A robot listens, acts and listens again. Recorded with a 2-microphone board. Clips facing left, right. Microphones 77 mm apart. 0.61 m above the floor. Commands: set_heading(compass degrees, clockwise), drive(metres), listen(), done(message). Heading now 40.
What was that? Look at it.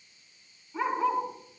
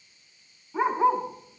set_heading(65)
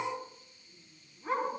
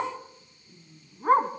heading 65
set_heading(185)
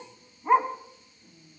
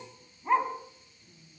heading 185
set_heading(170)
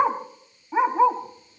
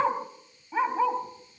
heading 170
set_heading(150)
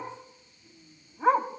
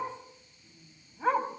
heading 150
set_heading(140)
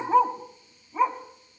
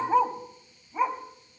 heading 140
done("Facing the dog barking.")